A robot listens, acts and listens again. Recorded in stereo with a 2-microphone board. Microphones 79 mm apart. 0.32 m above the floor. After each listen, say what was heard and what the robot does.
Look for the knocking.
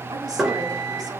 Turn 30° right.
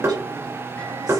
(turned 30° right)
So it is at 145° right. Turn 145° right.
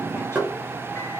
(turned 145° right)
The knocking is now 25° right. Turn 25° right.
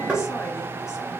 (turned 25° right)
The knocking is now 15° right. Turn 15° right.
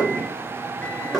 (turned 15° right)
Facing the knocking, over 4 m away.